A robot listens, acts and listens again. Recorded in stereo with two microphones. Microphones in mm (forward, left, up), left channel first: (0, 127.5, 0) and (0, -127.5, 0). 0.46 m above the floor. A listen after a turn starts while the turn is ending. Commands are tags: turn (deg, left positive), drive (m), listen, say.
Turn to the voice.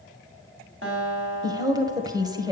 <turn deg="-30"/>
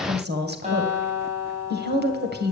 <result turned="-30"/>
<turn deg="-135"/>
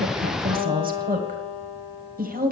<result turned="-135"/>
<turn deg="-40"/>
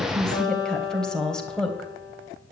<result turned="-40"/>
<say>Found it: a woman speaking, straight ahead, 1 to 2 m away.</say>